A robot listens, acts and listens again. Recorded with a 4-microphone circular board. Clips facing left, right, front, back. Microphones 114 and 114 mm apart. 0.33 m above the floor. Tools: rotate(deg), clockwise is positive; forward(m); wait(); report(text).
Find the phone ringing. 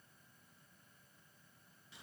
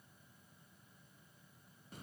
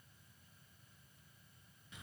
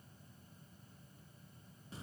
wait()
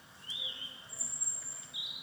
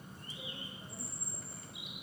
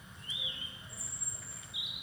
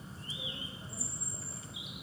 wait()
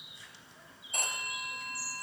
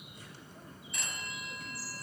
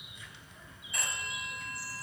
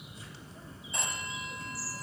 rotate(-120)
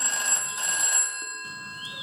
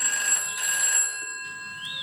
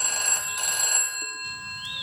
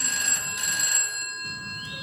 rotate(-30)
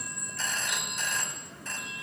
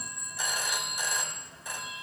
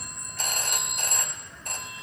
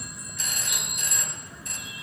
rotate(15)
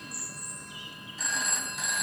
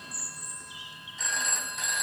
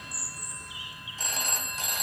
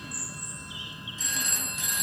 report("Found it: a phone ringing, straight ahead, 1 to 2 m away.")